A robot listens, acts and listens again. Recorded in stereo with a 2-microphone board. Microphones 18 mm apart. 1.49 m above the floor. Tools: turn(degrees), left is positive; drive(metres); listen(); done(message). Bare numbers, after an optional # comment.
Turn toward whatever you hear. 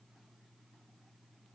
listen()
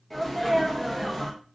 turn(30)
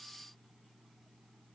listen()
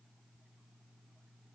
done("I heard a sneeze, but can't make it out now. It was about 25° right or 145° left.")